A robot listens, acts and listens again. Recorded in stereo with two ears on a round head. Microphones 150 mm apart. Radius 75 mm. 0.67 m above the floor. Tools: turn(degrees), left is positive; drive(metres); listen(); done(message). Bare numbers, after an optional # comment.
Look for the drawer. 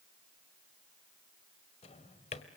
# The drawer: about 40° left or 140° left.
turn(40)
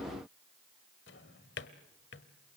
# So it is at 100° left.
turn(100)
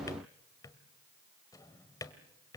# The drawer is now 20° left.
turn(20)
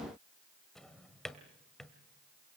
done("Found it: a drawer, straight ahead, 1 to 2 m away.")